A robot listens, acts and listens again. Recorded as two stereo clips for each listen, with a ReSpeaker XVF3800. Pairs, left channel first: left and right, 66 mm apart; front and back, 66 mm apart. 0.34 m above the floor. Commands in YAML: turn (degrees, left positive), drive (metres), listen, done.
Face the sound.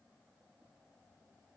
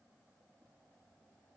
listen: true
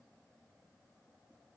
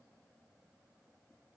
listen: true
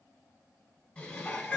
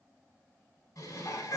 turn: 20
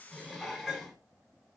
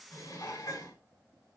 done: "Found it: dishes clattering, straight ahead, 1 to 2 m away."